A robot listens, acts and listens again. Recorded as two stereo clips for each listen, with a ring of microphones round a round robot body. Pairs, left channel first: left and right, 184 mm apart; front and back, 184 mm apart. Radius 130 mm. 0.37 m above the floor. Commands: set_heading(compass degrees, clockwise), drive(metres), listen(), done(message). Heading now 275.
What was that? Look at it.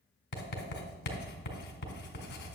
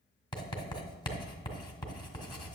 set_heading(210)
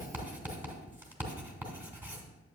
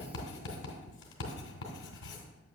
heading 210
set_heading(220)
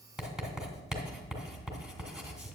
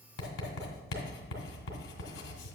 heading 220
done("Facing the writing, 1 to 2 m away.")